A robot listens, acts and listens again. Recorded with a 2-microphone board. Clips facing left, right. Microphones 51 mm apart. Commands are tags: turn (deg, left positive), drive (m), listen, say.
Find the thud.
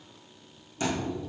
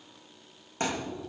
<turn deg="-40"/>
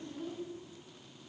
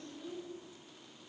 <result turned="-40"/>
<listen/>
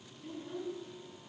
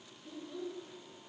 <say>I heard a thud, but can't make it out now. It was about straight ahead or 100° right.</say>